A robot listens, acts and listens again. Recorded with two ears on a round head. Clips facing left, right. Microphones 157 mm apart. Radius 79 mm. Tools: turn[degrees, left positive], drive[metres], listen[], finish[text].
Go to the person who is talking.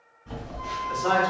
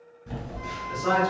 Thought: The man speaking: about 40° left or 140° left.
Action: turn[40]
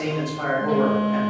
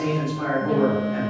Thought: So it is at 90° left.
Action: turn[90]
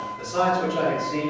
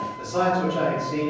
Action: drive[1.0]
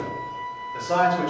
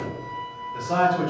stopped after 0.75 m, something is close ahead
Thought: The man speaking is now 15° left.
Action: turn[15]
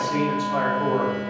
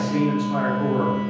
Action: finish[I am next to the man speaking.]